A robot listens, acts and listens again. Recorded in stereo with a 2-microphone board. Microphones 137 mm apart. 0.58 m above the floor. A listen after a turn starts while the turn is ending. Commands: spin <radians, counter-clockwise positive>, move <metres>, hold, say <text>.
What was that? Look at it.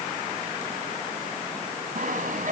spin -1.13
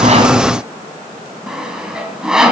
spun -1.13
say Found it: sawing, straight ahead, 2 to 4 m away.